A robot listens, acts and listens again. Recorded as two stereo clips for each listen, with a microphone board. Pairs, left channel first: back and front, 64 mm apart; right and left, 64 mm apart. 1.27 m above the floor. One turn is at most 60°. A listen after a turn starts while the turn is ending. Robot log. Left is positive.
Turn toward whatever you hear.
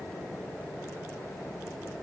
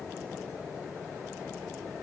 cmd idle
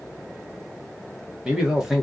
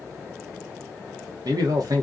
note: The man speaking: 85° left.
cmd yaw +60
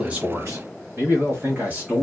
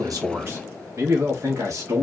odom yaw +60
note: The man speaking is now 65° left.
cmd yaw +60
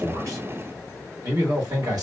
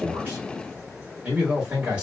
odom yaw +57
note: The man speaking is now 20° left.
cmd yaw +20
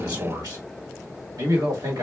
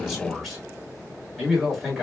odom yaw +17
end: Facing the man speaking.